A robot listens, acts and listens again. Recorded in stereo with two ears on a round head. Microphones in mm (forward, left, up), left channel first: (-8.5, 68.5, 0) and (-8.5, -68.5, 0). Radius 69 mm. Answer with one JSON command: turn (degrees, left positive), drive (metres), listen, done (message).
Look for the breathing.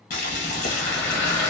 {"turn": 15}
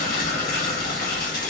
{"turn": 145}
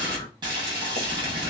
{"turn": 20}
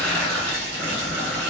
{"done": "Found it: breathing, straight ahead, 1 to 2 m away."}